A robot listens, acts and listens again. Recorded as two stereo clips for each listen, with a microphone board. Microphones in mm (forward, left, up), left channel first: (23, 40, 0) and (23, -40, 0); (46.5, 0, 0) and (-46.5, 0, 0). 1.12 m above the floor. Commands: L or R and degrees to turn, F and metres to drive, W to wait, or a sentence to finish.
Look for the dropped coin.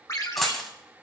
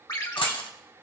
Facing the dropped coin.